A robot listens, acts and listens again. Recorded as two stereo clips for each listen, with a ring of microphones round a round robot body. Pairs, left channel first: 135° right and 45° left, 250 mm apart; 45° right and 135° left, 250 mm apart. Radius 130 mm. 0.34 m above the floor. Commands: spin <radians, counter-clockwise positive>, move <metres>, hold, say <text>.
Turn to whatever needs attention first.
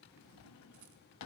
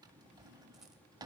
hold
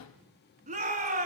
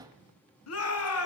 spin -0.26
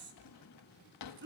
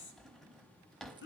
say Facing the shout.